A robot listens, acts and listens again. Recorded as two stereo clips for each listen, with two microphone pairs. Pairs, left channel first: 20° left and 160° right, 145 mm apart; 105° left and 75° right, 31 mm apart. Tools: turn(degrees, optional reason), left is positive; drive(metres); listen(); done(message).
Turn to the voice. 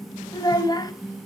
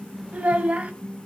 turn(degrees=-40, reason="The child speaking: 40° right.")
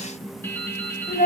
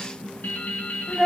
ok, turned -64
turn(degrees=25, reason="The child speaking is now 25° left.")
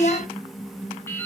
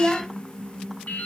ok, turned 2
turn(degrees=20, reason="The child speaking is now 20° left.")
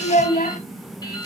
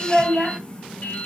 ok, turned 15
done("Found it: a child speaking, straight ahead.")